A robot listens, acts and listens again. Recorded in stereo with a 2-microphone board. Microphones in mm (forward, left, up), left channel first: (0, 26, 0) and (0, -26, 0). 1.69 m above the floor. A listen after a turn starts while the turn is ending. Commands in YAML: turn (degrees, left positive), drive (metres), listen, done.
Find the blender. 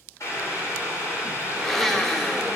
turn: 30
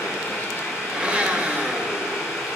turn: -20
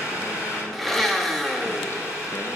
done: "Found it: a blender, straight ahead, under 1 m away."